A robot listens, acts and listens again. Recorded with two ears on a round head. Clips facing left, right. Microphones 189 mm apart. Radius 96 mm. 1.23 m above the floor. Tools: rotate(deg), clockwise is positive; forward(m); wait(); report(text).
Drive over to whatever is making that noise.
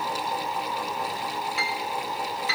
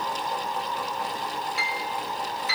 rotate(-70)
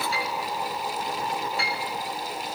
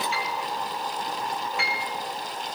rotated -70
rotate(-35)
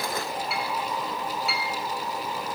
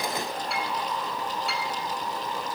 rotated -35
forward(1.0)
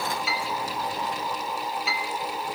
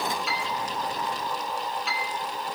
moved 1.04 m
forward(1.0)
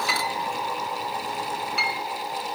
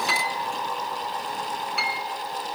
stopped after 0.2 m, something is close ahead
report("Arrived at the piano, straight ahead.")